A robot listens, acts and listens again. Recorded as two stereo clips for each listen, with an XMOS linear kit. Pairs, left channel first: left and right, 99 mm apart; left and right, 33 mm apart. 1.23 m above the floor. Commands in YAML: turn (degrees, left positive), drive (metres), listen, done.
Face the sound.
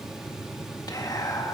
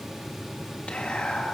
turn: 40
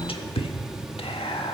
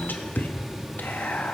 turn: 100
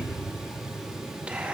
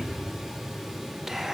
listen: true
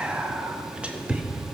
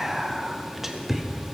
turn: -10
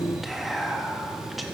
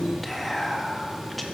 done: "Facing the whispering."